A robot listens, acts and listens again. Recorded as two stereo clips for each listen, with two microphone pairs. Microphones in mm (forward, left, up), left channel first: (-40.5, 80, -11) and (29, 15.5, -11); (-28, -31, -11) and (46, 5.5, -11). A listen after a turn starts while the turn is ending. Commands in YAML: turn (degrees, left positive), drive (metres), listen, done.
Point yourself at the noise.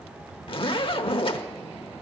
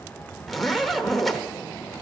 turn: 115
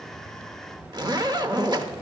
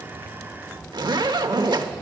done: "Facing the zipper, 1 to 2 m away."